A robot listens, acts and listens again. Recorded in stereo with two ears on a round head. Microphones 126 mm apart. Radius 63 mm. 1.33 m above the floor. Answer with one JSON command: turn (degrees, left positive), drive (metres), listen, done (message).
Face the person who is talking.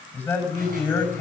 {"turn": 30}
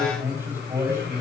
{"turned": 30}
{"turn": -20}
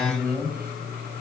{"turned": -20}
{"done": "Found it: a man speaking, straight ahead."}